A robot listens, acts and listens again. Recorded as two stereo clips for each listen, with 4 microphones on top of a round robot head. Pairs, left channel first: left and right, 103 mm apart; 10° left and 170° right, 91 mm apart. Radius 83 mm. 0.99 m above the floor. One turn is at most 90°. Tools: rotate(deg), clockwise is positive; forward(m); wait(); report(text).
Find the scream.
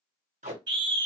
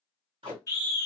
rotate(45)
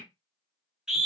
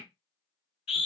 report("Facing the scream.")